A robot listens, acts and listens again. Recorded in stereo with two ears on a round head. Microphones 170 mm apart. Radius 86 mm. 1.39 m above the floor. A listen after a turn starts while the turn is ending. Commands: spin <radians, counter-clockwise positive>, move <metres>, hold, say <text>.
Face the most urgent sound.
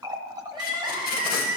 spin -0.35
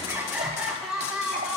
say Found it: crying, straight ahead.